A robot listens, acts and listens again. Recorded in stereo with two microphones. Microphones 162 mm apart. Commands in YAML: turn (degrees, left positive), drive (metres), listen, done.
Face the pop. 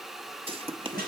turn: -35
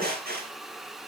listen: true
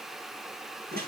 done: "I heard a pop, but can't make it out now. It was about straight ahead or 110° right."